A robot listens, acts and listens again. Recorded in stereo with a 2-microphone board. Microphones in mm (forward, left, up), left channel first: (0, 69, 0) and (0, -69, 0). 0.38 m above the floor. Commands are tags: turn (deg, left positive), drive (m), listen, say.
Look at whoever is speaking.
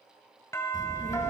<turn deg="60"/>
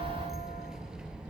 <say>Facing the child speaking.</say>